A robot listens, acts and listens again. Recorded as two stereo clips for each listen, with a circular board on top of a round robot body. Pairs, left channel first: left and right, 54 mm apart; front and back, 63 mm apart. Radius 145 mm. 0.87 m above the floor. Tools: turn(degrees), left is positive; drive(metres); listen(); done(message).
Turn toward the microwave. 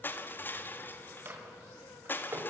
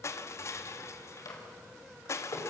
turn(degrees=-35)
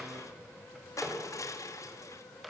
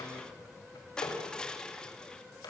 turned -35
done("Found it: a microwave, straight ahead, over 4 m away.")